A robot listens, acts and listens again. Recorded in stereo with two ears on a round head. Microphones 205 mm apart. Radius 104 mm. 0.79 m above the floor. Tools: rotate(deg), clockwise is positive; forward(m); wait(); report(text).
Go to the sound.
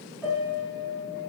rotate(-30)
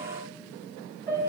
rotate(15)
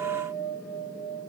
forward(1.0)
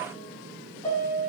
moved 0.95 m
rotate(-10)
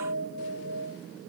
forward(1.0)
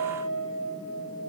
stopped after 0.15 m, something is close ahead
report("I am next to the piano.")